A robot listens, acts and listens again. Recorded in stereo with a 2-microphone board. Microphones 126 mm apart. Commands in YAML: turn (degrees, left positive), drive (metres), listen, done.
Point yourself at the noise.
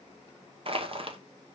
turn: -50
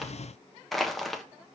done: "Found it: crushing, straight ahead."